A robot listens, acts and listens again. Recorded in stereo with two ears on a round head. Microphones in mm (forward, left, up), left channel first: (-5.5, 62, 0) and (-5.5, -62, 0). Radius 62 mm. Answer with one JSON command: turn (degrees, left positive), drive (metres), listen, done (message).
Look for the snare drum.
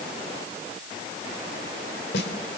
{"turn": 90}
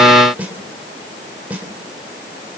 {"turn": -10}
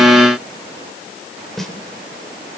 {"done": "Facing the snare drum, 2 to 4 m away."}